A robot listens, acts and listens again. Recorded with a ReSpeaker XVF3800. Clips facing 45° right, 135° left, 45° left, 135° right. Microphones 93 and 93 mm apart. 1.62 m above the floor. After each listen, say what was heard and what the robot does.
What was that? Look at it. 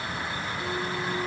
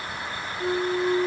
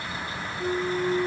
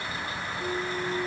The flute: 95° left. Turn 95° left.
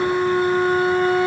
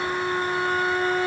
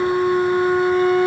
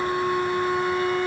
The flute is now 10° left. Turn 10° left.
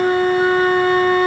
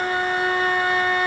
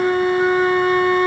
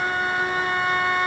Facing the flute.